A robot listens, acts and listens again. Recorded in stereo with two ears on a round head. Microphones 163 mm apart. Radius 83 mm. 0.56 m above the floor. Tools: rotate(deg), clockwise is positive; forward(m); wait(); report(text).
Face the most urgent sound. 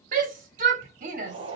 rotate(50)
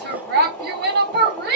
rotate(75)
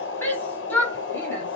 rotate(-10)
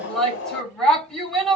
report("Found it: a shout, straight ahead, 1 to 2 m away.")